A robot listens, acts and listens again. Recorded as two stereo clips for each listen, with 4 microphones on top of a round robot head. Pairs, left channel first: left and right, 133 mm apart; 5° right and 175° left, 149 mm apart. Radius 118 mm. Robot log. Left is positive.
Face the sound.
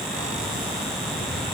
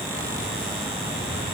note: The keys jangling: 60° right.
cmd yaw -60
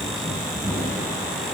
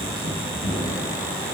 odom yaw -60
end: Found it: keys jangling, straight ahead, 2 to 4 m away.